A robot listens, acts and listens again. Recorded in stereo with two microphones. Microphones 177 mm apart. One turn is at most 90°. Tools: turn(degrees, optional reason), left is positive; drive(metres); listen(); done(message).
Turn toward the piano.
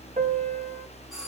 turn(degrees=-45, reason="The piano: about 45° right or 135° right.")
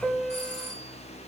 done("Found it: a piano, straight ahead.")